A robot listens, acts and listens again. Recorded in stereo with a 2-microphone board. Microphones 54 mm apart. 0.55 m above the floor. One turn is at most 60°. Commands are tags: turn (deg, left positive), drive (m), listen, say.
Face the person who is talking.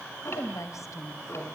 <turn deg="60"/>
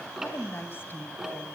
<turn deg="40"/>
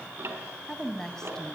<turn deg="10"/>
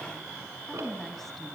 <say>Facing the woman speaking.</say>